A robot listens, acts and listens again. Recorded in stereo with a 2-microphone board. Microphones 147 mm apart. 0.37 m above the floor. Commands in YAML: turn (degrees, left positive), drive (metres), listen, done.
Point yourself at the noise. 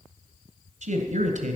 turn: -60
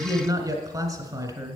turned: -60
turn: -30
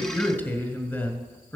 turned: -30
turn: 15
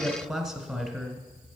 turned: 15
done: "Facing the man speaking, 2 to 4 m away."